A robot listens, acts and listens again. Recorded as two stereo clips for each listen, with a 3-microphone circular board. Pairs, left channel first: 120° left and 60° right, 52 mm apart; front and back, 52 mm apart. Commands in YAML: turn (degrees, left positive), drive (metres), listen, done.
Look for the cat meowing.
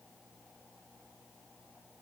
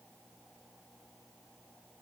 listen: true
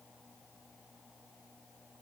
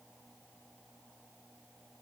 listen: true
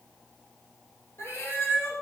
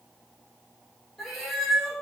turn: 90
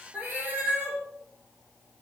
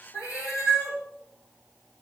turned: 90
turn: -10
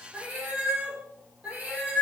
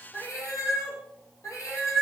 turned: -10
done: "Facing the cat meowing, 2 to 4 m away."